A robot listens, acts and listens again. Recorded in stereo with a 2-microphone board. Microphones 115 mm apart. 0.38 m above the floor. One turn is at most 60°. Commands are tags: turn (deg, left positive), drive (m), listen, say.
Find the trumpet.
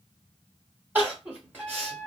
<turn deg="15"/>
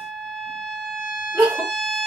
<say>Facing the trumpet.</say>